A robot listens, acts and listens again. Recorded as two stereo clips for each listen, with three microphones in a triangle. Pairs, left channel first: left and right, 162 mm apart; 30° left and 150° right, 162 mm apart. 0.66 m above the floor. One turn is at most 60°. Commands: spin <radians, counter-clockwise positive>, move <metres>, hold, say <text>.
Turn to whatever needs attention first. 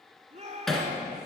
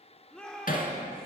spin -0.96
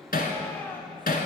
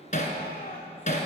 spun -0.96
hold
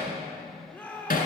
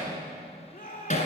spin 0.17
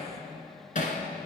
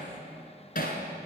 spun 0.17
hold
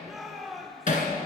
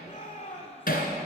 say Found it: a shout, straight ahead, 2 to 4 m away.